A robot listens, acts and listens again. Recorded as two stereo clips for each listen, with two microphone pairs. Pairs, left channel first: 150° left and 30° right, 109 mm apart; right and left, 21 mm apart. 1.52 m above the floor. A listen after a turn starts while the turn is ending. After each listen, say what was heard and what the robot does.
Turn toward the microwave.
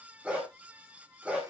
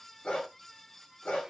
Keep listening.
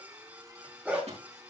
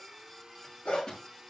The microwave: 40° right. Turn 40° right.
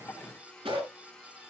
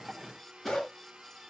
Keep listening.
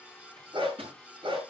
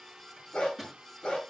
Found it: a microwave, straight ahead.